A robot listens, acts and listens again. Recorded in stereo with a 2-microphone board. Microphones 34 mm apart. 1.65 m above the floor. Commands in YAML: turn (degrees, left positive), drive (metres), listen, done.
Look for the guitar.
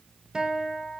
turn: -20
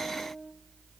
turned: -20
turn: -140
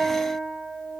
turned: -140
turn: -15
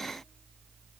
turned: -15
listen: true
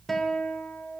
done: "Found it: a guitar, straight ahead, under 1 m away."